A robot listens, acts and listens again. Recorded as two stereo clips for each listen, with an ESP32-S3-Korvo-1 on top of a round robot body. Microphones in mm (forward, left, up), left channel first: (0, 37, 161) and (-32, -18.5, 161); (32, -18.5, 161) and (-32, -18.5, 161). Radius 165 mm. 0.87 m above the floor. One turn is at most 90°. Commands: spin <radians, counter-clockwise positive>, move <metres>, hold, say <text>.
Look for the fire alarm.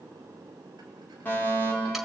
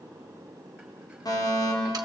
say Found it: a fire alarm, straight ahead, over 4 m away.